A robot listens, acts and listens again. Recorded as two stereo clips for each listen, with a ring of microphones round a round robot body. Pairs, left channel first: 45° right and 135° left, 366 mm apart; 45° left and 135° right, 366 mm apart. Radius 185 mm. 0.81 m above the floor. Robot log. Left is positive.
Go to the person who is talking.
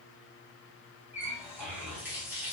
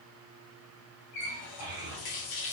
note: The child speaking: 160° left.
cmd yaw +160
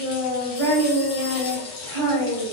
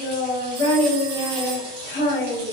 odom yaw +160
note: The child speaking is now 35° left.
cmd yaw +35
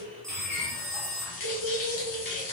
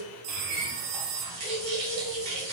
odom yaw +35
note: The child speaking is now 25° left.
cmd yaw +25
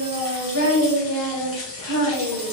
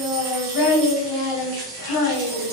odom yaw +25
cmd fwd 1.0
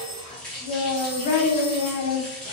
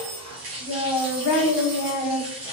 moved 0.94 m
cmd fwd 1.0
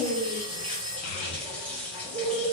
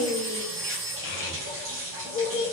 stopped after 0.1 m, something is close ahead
end: I am next to the child speaking.